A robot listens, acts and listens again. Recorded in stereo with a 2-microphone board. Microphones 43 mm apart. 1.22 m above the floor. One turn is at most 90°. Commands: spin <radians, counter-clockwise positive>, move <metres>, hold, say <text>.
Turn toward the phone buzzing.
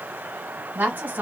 hold
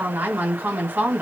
hold
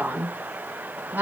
say I can't make out a phone buzzing to turn to.